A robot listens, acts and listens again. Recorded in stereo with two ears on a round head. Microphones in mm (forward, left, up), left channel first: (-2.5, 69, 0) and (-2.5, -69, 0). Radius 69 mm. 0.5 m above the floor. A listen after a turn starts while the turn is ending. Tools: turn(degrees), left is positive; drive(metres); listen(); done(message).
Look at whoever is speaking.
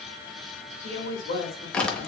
turn(degrees=65)
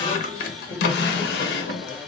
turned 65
listen()
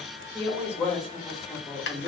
turn(degrees=10)
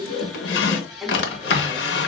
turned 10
done("Facing the woman speaking, 1 to 2 m away.")